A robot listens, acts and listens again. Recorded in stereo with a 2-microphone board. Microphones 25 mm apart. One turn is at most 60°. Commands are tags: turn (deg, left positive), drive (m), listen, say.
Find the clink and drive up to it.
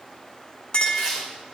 <turn deg="40"/>
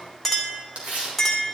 <drive m="1.0"/>
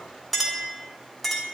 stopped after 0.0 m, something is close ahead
<say>Blocked. The clink is further on, straight ahead.</say>